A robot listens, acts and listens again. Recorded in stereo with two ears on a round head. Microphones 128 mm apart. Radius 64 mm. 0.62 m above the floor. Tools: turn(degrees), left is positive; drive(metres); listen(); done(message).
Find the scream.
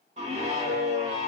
turn(degrees=-50)
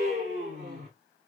turn(degrees=-65)
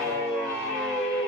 done("Found it: a scream, straight ahead, 1 to 2 m away.")